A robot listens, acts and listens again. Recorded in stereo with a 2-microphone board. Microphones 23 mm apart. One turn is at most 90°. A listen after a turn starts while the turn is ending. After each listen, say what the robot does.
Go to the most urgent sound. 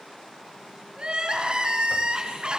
Turn 40° right.
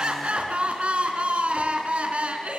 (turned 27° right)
Turn 90° right.
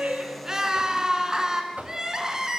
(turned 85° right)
Turn 25° right.
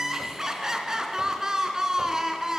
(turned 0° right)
Turn 25° right.
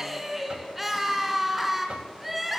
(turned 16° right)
Turn 10° right.
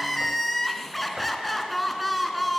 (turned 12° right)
Drive 1.0 m forward.
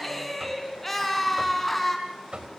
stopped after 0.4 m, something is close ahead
Turn 10° left.
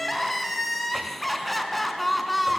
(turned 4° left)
Blocked. The crying is further on, straight ahead.